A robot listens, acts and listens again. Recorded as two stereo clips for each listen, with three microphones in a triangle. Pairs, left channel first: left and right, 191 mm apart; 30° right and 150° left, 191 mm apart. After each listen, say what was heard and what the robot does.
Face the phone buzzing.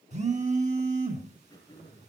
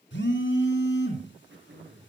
The phone buzzing: 40° right. Turn 40° right.
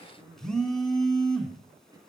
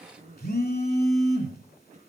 Facing the phone buzzing.